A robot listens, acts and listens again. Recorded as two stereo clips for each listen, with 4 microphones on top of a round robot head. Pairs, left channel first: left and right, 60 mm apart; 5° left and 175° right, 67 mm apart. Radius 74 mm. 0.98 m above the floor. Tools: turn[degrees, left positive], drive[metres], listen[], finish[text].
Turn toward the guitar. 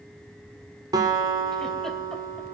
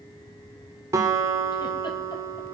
Thought: The guitar: 120° right.
Action: turn[-120]
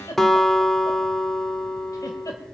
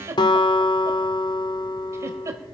Action: finish[Facing the guitar.]